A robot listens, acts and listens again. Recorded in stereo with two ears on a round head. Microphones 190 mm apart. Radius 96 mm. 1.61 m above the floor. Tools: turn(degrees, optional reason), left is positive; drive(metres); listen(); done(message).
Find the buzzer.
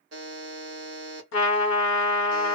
turn(degrees=-55, reason="The buzzer: about 55° right or 125° right.")
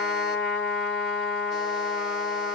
listen()
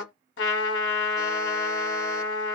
listen()
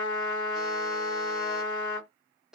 done("Found it: a buzzer, straight ahead.")